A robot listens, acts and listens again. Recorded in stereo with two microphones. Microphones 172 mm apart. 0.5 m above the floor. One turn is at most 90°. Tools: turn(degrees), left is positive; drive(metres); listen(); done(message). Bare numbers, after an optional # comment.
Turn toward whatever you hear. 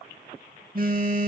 # The phone buzzing: about 55° right or 125° right.
turn(-55)
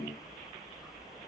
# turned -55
listen()
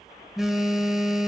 done("Found it: a phone buzzing, straight ahead.")